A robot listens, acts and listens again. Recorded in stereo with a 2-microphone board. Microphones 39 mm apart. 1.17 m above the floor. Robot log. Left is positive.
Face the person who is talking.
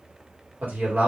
note: The man speaking: about 50° right or 130° right.
cmd yaw -50
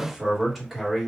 end: Found it: a man speaking, straight ahead, 1 to 2 m away.